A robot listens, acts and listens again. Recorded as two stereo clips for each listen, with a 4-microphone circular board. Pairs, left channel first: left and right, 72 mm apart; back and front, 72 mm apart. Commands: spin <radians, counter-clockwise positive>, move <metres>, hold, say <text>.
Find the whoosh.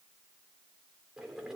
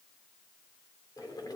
hold
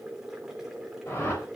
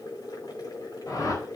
spin 2.53
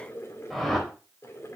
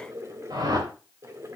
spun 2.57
say Facing the whoosh.